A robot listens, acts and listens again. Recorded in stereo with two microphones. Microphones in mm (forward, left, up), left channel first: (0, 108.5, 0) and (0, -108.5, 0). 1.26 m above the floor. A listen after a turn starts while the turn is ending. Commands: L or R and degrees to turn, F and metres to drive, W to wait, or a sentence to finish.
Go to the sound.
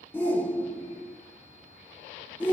L30
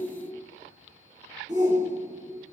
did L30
R20
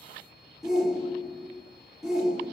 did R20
F1.0
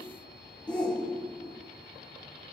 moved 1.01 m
F1.0
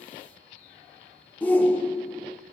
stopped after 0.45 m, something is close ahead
L10
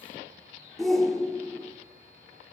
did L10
Arrived at the shout, straight ahead.